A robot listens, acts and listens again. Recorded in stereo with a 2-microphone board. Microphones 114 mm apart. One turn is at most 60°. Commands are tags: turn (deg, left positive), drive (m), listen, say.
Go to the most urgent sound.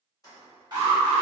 <turn deg="-40"/>
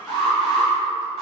<drive m="1.0"/>
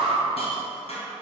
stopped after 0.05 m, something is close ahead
<say>Something is in my way. I am facing the alarm but have not reached it.</say>